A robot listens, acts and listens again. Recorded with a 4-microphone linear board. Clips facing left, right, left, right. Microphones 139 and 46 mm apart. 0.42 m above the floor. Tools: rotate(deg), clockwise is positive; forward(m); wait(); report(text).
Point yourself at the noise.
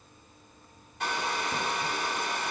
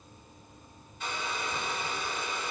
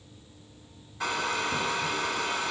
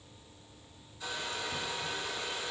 rotate(-90)
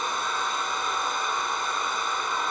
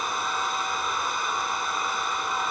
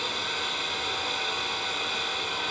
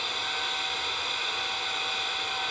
report("Facing the hair dryer.")